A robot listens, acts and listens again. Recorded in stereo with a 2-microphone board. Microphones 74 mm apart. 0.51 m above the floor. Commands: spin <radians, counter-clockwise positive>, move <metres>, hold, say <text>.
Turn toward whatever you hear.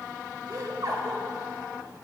spin -1.05
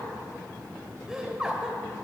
spin -0.17
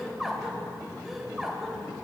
say Facing the laughter.